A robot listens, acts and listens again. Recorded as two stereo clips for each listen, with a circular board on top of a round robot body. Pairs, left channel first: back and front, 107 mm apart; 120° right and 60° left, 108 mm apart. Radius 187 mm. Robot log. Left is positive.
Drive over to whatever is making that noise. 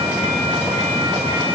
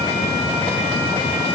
cmd idle
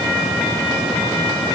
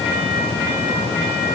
cmd idle
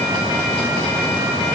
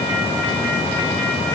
end: I can't make out anything.